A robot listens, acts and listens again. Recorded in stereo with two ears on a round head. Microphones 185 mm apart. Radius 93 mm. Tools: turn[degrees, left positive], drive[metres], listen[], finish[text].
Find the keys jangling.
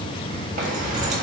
Thought: The keys jangling: about 35° right or 145° right.
Action: turn[-35]
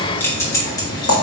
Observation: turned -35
Thought: So it is at 15° left.
Action: turn[15]
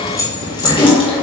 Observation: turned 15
Thought: The keys jangling is now 25° left.
Action: turn[25]
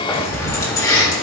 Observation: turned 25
Thought: The keys jangling is now 20° left.
Action: turn[20]
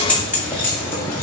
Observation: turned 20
Thought: The keys jangling is now 10° left.
Action: turn[10]
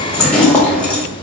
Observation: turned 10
Action: finish[Found it: keys jangling, straight ahead.]